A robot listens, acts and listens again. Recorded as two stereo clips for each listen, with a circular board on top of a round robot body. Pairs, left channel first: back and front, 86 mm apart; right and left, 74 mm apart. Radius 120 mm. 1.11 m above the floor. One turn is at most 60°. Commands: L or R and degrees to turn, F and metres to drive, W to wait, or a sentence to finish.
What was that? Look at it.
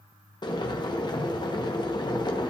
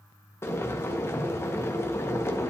R60
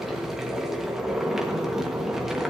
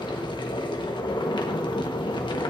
R60
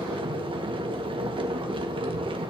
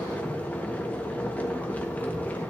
R20
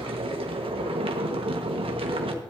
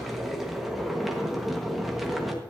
Found it: boiling, straight ahead.